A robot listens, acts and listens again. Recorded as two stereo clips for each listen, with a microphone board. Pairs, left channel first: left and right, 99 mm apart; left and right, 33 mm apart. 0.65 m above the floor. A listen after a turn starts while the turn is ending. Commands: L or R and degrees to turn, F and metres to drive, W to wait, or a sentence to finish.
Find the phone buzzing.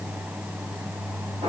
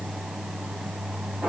W
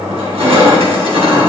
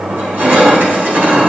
W
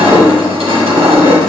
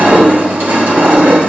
I can't make out a phone buzzing to turn to.